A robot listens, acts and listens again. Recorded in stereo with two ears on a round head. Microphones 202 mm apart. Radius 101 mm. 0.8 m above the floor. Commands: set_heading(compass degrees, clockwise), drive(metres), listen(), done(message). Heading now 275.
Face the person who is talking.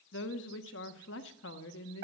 set_heading(215)
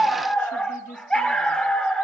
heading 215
set_heading(175)
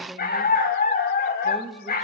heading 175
done("Found it: a woman speaking, straight ahead.")